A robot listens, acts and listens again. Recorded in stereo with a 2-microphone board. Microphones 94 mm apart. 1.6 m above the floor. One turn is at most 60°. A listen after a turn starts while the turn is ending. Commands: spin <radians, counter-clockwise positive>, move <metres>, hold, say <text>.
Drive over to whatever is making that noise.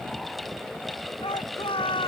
spin 1.05
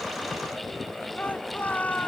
spin 0.26
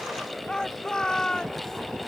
move 1.0
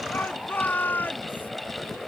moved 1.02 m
spin 0.35
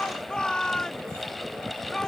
move 1.0
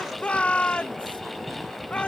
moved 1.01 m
spin 0.26
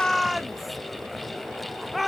move 1.0
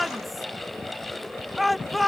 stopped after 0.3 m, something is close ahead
say I am next to the shout.